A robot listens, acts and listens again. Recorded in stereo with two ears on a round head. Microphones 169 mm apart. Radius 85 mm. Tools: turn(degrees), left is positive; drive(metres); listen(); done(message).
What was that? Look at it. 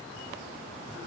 listen()
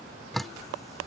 turn(degrees=30)
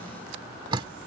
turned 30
turn(degrees=-30)
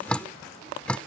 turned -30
done("Found it: dripping, straight ahead.")